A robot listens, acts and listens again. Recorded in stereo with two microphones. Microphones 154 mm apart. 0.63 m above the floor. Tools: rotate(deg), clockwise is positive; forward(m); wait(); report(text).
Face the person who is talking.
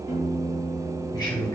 rotate(-25)
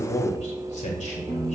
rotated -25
rotate(-130)
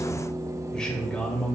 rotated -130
report("Facing the man speaking.")